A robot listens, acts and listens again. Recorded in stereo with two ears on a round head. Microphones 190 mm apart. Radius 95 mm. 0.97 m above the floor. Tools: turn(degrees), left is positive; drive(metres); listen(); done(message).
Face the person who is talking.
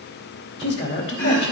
turn(degrees=55)
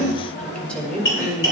done("Facing the woman speaking.")